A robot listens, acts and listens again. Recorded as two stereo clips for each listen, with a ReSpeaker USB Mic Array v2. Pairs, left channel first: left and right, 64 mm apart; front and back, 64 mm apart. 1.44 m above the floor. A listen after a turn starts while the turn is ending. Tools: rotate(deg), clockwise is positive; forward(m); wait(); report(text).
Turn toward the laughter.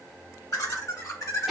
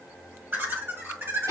rotate(-135)
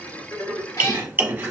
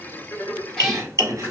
rotate(-45)
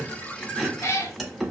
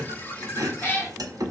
wait()
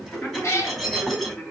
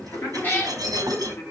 rotate(-30)
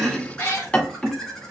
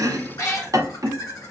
rotate(-15)
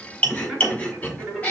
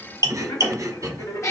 report("Facing the laughter.")